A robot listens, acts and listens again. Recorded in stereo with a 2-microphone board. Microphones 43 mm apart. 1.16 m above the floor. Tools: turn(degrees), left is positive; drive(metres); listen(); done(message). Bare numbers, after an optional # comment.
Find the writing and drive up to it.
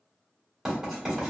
turn(-30)
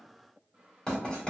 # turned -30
# So it is at 20° left.
turn(20)
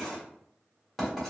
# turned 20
drive(1.0)
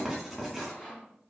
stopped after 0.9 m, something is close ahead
done("I am next to the writing.")